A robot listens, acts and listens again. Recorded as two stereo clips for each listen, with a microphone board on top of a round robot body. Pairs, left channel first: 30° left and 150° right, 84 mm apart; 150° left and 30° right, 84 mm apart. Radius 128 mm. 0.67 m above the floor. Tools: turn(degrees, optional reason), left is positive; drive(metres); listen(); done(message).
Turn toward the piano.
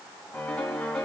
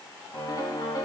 turn(degrees=110, reason="The piano: 110° left.")
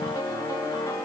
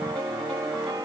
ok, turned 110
turn(degrees=-10, reason="The piano is now 10° right.")
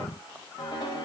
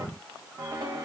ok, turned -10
done("Found it: a piano, straight ahead.")